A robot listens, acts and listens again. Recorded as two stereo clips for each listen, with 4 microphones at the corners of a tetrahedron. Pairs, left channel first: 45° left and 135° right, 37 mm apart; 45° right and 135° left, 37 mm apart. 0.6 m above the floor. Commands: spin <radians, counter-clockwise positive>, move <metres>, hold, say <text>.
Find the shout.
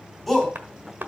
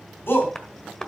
spin -0.79
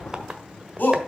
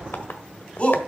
spin 0.17
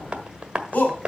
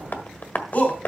say Found it: a shout, straight ahead, over 4 m away.